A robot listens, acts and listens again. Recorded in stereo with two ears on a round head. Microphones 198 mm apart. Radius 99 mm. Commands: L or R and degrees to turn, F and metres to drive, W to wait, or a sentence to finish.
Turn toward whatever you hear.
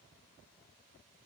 W
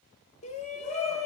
L30
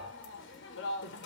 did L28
L120
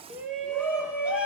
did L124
Facing the shout, 1 to 2 m away.